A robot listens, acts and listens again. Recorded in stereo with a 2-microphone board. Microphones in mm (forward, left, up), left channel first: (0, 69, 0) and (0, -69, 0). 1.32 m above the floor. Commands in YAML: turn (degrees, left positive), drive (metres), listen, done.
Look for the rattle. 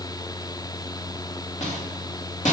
turn: 55
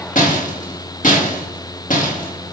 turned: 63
turn: 65
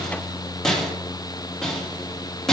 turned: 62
done: "Facing the rattle."